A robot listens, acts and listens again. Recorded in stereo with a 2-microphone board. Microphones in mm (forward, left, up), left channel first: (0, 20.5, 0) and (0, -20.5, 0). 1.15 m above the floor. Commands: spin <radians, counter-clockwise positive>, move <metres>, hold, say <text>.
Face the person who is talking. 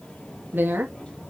spin -0.96
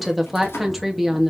say Found it: a woman speaking, straight ahead, 2 to 4 m away.